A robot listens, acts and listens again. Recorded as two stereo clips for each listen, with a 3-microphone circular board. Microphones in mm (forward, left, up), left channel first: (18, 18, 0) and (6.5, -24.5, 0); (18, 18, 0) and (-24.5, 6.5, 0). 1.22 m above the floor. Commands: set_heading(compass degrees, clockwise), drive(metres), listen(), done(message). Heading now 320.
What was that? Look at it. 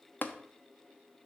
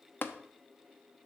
set_heading(285)
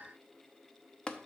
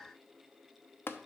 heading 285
set_heading(275)
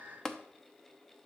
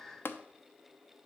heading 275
done("Found it: tapping, straight ahead.")